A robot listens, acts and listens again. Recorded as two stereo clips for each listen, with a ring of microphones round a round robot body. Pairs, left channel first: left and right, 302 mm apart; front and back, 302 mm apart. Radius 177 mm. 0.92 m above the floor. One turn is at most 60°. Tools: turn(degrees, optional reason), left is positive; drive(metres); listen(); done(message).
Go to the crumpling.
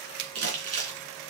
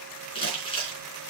turn(degrees=-60, reason="The crumpling: 75° right.")
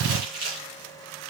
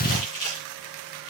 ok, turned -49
turn(degrees=-25, reason="The crumpling is now 25° right.")
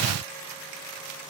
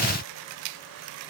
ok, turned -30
listen()
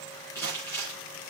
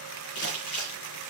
drive(metres=1.0)
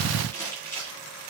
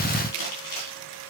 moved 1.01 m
drive(metres=1.0)
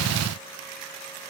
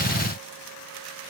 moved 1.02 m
listen()
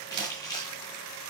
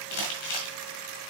turn(degrees=10, reason="The crumpling is now 10° left.")
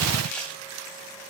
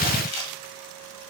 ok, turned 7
drive(metres=1.0)
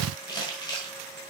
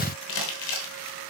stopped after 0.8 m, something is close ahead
turn(degrees=15, reason="The crumpling is now 15° left.")
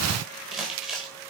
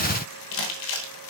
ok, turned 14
done("Arrived at the crumpling, straight ahead.")